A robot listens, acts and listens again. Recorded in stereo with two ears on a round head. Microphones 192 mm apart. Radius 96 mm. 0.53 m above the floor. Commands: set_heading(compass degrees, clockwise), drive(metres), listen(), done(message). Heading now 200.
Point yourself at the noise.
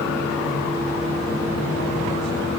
listen()
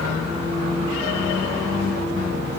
listen()
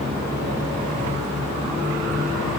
done("I can't make out anything to turn to.")